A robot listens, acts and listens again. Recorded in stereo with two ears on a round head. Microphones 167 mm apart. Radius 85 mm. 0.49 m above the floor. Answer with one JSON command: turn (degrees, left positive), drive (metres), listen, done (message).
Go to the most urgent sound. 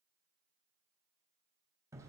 {"listen": true}
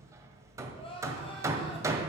{"turn": 30}
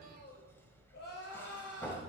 {"turn": 120}
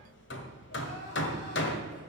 {"turn": 55}
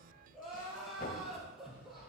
{"drive": 1.0}
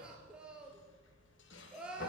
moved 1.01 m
{"drive": 1.0}
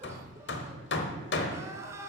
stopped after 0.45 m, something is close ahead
{"turn": -15}
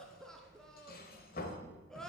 {"done": "Arrived at the crying, straight ahead."}